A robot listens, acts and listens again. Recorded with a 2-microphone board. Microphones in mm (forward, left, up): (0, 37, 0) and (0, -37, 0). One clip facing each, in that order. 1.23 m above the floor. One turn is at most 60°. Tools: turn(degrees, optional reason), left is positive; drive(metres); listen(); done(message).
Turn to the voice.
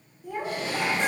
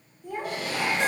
turn(degrees=30)
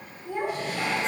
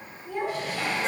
turn(degrees=60, reason="So it is at 150° left.")
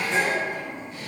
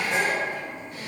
turn(degrees=60, reason="The child speaking is now 90° left.")
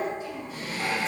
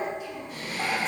turn(degrees=45, reason="The child speaking is now 45° left.")
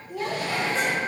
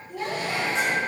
done("Found it: a child speaking, straight ahead, under 1 m away.")